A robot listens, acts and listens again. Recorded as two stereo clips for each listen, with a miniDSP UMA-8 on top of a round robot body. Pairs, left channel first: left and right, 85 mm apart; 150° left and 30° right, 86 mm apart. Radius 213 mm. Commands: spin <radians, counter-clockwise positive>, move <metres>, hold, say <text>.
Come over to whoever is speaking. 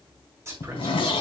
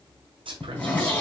spin -0.52
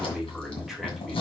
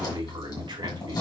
move 1.0
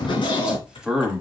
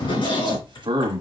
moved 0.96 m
spin -0.17
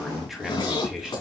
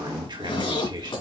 move 1.0
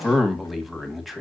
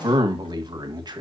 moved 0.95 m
move 1.0
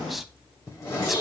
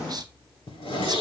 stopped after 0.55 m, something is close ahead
say I am next to the man speaking.